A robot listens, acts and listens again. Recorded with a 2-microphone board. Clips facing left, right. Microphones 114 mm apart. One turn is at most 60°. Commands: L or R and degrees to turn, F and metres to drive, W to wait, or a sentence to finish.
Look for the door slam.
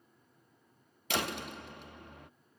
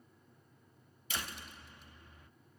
L60
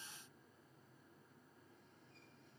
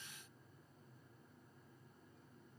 W
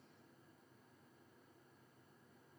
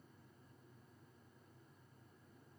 I heard a door slam, but can't make it out now. It was about 10° left or 50° left.